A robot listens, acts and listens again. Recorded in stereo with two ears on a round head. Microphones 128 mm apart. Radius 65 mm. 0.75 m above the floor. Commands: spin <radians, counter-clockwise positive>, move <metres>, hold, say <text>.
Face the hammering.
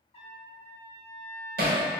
spin -1.13
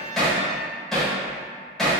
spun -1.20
say Found it: hammering, straight ahead, 1 to 2 m away.